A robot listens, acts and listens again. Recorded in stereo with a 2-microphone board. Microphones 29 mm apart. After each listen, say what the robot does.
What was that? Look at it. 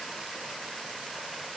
Keep listening.
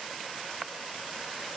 Keep listening.
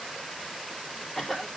Turn 30° left.
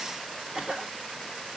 Turn 35° right.
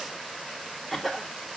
Found it: a cough, straight ahead, 2 to 4 m away.